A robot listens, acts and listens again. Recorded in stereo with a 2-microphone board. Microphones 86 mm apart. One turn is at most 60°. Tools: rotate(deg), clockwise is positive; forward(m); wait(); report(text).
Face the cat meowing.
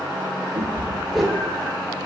rotate(60)
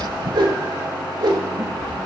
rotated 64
rotate(45)
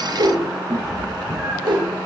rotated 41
report("Found it: a cat meowing, straight ahead.")